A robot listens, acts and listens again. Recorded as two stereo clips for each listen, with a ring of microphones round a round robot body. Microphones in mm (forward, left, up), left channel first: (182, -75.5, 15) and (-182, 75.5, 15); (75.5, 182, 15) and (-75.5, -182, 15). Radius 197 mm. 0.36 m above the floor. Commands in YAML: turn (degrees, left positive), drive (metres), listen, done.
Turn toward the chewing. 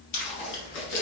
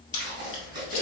turn: 25
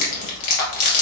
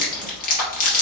done: "Facing the chewing."